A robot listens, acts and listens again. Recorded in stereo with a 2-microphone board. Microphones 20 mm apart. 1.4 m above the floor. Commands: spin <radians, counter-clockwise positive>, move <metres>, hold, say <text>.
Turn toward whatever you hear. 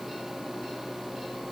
hold
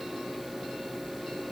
hold
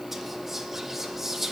spin -0.52
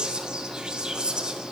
spin -2.44
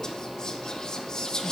spin 0.52
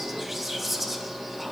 spin -0.26
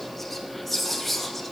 say Facing the whispering, 1 to 2 m away.